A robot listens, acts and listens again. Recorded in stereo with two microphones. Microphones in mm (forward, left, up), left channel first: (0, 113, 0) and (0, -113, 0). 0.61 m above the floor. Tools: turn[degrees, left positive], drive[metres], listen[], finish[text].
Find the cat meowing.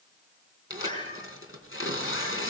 Thought: The cat meowing: about 25° right or 155° right.
Action: turn[-25]
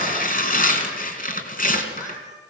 Thought: So it is at 15° left.
Action: turn[15]
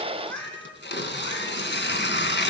Action: finish[Facing the cat meowing.]